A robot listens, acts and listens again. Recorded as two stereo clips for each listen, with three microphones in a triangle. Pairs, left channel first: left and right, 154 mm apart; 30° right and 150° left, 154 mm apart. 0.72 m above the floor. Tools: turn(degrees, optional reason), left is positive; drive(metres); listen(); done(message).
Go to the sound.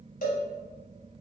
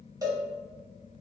turn(degrees=85, reason="The cowbell: 85° left.")
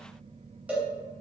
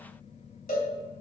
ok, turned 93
turn(degrees=-10, reason="The cowbell is now 10° right.")
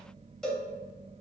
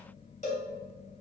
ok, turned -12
drive(metres=1.0)
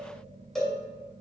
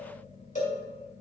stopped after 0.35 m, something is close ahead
done("Something is in my way. I am facing the cowbell but have not reached it.")